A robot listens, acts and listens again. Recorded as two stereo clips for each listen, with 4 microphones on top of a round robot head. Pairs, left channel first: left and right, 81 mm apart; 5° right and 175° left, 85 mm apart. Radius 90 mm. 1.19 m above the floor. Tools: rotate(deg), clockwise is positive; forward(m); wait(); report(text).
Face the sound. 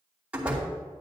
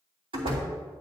rotate(170)
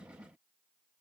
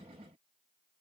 report("I heard a door slam from this way, but can't make it out now.")